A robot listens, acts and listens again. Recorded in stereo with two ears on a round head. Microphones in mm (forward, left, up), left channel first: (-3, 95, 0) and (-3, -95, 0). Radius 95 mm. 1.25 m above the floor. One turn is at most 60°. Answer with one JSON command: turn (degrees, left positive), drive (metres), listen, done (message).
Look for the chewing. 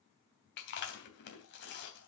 {"turn": 55}
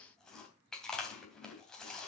{"done": "Facing the chewing, 2 to 4 m away."}